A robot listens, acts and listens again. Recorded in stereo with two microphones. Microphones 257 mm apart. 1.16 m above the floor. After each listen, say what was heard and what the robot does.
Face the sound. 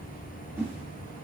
Turn 30° right.
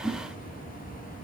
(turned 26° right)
So it is at 20° left. Turn 20° left.
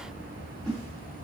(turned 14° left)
Found it: a whoosh, straight ahead, 1 to 2 m away.